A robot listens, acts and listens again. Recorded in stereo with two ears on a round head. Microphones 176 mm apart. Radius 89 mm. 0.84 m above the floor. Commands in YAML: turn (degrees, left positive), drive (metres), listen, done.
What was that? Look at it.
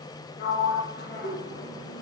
turn: 55
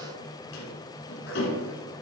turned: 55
turn: 65
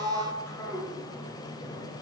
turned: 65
turn: 15
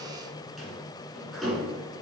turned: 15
done: "Found it: a sliding door, straight ahead."